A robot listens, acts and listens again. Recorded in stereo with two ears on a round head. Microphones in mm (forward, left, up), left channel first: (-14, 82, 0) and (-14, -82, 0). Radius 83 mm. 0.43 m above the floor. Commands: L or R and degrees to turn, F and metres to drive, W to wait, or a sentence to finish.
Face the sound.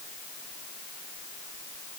W
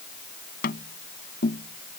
L55
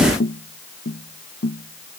L65
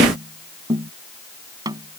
R20
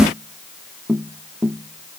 Found it: tapping, straight ahead.